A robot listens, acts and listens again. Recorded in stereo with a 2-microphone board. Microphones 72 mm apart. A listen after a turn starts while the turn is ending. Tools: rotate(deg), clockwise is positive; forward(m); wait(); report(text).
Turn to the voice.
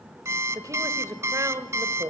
rotate(45)
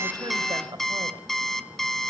rotate(85)
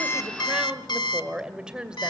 rotate(15)
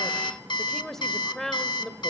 report("Found it: a woman speaking, straight ahead.")